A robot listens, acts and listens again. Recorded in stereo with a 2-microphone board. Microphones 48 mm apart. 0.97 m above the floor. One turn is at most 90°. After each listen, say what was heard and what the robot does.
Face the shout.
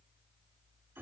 Keep listening.
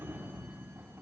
Keep listening.
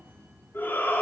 The shout: about 55° left or 125° left. Turn 55° left.
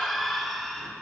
Found it: a shout, straight ahead.